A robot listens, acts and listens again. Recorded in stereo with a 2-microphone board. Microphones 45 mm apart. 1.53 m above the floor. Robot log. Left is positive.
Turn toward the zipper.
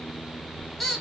note: The zipper: about 30° right or 150° right.
cmd yaw -30
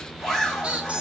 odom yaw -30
end: Found it: a zipper, straight ahead, 2 to 4 m away.